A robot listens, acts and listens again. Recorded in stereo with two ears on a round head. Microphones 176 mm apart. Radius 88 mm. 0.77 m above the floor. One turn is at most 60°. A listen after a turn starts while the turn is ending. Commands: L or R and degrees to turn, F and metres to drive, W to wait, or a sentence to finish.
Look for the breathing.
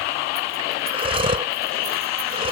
R30
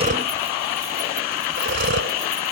R60
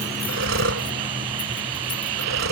R60
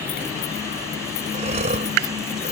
R35
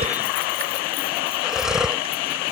Facing the breathing.